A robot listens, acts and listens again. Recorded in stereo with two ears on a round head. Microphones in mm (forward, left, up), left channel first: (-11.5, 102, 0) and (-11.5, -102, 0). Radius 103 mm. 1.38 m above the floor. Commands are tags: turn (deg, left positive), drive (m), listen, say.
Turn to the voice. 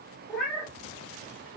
<listen/>
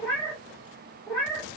<listen/>
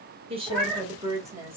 <turn deg="-30"/>
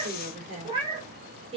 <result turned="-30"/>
<turn deg="-25"/>
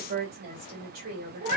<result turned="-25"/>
<turn deg="-140"/>
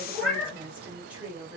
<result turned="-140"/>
<say>Facing the woman speaking.</say>